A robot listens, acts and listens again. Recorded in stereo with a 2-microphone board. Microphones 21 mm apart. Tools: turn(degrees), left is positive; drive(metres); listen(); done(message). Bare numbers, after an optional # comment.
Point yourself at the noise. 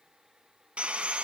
# The sawing: about 65° right or 115° right.
turn(-65)
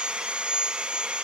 # So it is at 50° right.
turn(-50)
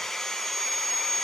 # The sawing is now 15° left.
turn(15)
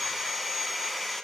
done("Found it: sawing, straight ahead, 1 to 2 m away.")